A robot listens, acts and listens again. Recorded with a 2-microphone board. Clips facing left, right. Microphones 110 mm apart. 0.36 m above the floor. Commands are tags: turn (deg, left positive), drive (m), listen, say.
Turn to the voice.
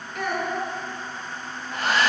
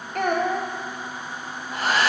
<turn deg="-55"/>
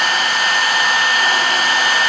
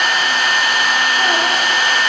<listen/>
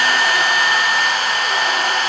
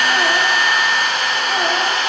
<listen/>
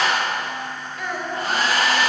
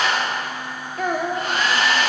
<turn deg="-55"/>
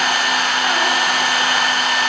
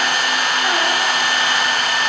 <listen/>
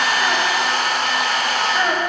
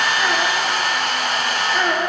<say>Facing the child speaking.</say>